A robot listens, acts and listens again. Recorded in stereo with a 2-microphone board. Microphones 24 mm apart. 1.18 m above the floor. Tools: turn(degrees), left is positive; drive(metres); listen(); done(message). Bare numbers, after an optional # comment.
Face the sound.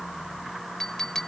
# The clink: about 20° left or 160° left.
turn(20)
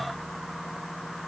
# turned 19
listen()
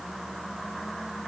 listen()
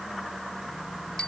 done("I heard a clink, but can't make it out now. It was about 5° left or 140° left.")